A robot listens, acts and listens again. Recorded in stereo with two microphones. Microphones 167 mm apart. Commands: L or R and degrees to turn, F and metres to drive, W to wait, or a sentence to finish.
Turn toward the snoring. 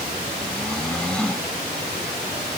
L30
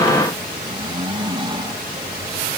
R25
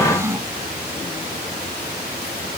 R15
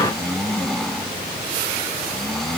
Facing the snoring.